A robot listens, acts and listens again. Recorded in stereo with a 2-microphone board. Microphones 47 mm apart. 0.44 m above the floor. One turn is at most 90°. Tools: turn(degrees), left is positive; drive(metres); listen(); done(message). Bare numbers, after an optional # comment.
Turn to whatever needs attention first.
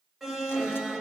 turn(-30)
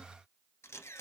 listen()
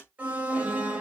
# So it is at 140° right.
turn(-90)
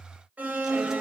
# The alarm is now 35° right.
turn(-35)
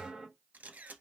# The alarm is now 15° right.
turn(-15)
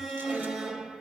done("Facing the alarm.")